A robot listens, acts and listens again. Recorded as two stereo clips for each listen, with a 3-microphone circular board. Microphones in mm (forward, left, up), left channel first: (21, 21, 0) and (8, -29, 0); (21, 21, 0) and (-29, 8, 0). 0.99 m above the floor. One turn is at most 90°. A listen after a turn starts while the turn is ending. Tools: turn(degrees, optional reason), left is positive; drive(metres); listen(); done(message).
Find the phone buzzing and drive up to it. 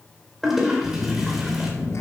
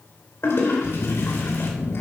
turn(degrees=50, reason="The phone buzzing: 50° left.")
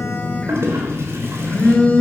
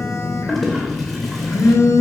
drive(metres=1.0)
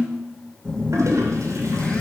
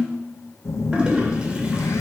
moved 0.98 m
drive(metres=1.0)
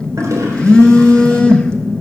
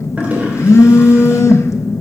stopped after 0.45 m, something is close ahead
done("I am next to the phone buzzing.")